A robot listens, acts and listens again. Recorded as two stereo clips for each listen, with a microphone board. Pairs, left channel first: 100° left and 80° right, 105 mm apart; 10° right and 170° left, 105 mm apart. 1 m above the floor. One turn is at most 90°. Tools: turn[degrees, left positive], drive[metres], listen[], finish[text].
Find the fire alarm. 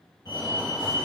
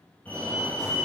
Thought: The fire alarm: 60° left.
Action: turn[60]
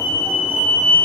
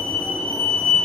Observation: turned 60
Action: finish[Facing the fire alarm, 2 to 4 m away.]